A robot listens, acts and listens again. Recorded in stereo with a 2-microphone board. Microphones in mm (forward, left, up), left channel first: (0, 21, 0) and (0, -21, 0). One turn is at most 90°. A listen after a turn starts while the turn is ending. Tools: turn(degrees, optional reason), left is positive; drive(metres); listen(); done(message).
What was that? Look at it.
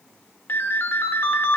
turn(degrees=60, reason="The ringtone: about 60° left or 120° left.")
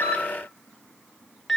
done("Found it: a ringtone, straight ahead, under 1 m away.")